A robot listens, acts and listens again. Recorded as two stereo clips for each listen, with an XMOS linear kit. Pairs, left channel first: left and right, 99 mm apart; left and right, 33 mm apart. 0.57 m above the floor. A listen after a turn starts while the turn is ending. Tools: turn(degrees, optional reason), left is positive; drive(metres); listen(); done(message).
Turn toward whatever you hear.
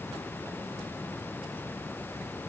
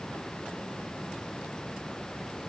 listen()
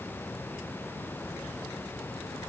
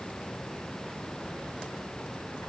listen()
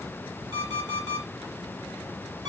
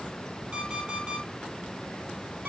turn(degrees=-45, reason="The alarm clock: about 45° right or 135° right.")
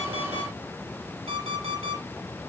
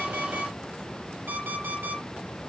turn(degrees=-90, reason="So it is at 90° right.")
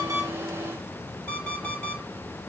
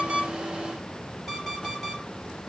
turn(degrees=10, reason="The alarm clock is now 10° left.")
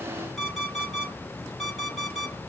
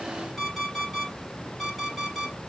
done("Facing the alarm clock, over 4 m away.")